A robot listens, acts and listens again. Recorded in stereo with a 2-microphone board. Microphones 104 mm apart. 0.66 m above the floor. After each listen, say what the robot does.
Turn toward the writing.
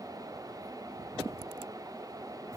Keep listening.
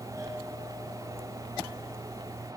Keep listening.
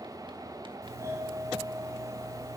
I can't make out writing, only a doorbell.